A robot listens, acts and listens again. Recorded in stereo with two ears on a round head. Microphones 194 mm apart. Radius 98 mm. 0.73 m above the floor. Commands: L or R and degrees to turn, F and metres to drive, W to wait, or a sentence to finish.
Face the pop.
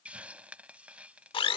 W
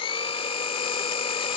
W
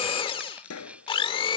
L90
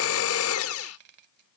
Facing where the pop came from. I can't hear it now.